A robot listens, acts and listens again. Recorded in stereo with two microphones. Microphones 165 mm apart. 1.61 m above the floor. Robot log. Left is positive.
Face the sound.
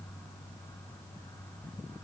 cmd idle
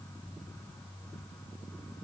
cmd idle
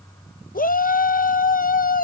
note: The shout: about 65° left or 115° left.
cmd yaw +65
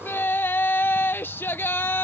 note: So it is at 15° left.
cmd yaw +15
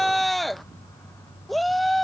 end: Facing the shout.